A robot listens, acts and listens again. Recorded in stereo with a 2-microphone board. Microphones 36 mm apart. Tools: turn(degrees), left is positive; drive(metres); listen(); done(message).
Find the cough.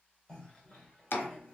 turn(degrees=20)
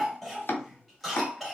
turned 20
done("Found it: a cough, straight ahead, 2 to 4 m away.")